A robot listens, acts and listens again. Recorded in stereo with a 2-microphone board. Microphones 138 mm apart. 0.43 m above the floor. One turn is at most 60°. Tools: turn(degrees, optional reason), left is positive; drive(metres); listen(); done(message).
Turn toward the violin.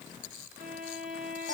turn(degrees=-60, reason="The violin: about 70° right or 110° right.")
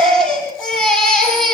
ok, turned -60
listen()
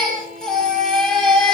listen()
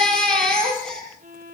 turn(degrees=-50, reason="So it is at 50° right.")
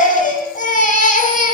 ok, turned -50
listen()
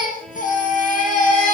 listen()
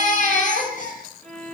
done("Found it: a violin, straight ahead, over 4 m away.")